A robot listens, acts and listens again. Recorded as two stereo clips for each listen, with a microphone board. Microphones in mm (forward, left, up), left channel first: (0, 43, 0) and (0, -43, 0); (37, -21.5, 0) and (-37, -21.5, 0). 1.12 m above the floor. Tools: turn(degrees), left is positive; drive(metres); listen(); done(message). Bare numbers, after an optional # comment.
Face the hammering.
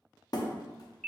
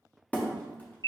# The hammering: 65° left.
turn(65)
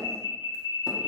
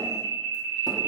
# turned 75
# Nothing new. It was at 10° right.
turn(-10)
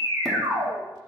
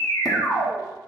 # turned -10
listen()
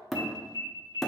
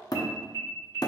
done("Found it: hammering, straight ahead.")